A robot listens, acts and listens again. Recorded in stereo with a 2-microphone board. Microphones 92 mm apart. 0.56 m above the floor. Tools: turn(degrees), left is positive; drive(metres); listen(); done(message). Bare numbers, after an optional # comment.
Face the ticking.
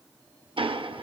# The ticking: about 70° right or 110° right.
turn(-70)
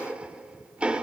# So it is at 15° right.
turn(-15)
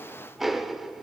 done("Found it: ticking, straight ahead.")